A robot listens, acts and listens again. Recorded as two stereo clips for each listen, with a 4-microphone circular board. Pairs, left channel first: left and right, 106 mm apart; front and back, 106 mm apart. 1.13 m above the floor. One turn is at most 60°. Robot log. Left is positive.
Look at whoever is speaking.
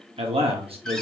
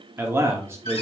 note: The man speaking: 115° right.
cmd yaw -60
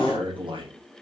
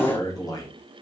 note: The man speaking is now 50° right.
cmd yaw -50
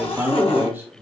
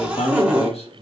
note: The man speaking is now 20° right.
cmd yaw -20
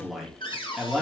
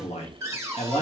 end: Found it: a man speaking, straight ahead.